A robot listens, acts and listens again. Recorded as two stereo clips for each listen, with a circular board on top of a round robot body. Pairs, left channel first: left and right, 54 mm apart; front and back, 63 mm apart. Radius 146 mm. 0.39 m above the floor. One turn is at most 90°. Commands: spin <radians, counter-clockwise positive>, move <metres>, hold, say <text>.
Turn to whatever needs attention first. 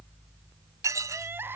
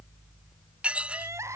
spin -1.57
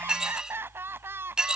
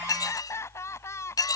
spin -0.79
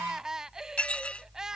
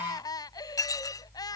spin -0.17
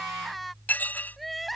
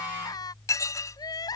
say Facing the crying.